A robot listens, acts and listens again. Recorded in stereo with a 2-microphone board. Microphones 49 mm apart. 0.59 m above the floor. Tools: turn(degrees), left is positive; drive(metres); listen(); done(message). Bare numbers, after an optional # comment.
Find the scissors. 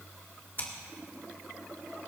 # The scissors: about 45° left or 135° left.
turn(45)
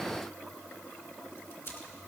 # So it is at 80° left.
turn(80)
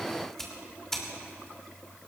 # The scissors is now 10° left.
turn(10)
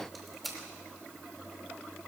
done("Facing the scissors.")